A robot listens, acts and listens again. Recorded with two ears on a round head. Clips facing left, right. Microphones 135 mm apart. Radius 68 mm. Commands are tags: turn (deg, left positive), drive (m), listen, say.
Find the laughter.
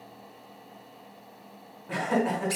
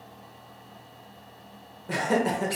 <turn deg="-45"/>
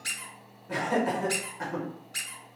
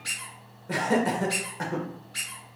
<turn deg="-80"/>
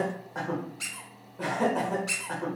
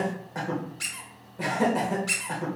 <turn deg="-15"/>
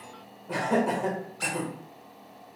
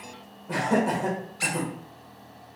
<say>Found it: laughter, straight ahead.</say>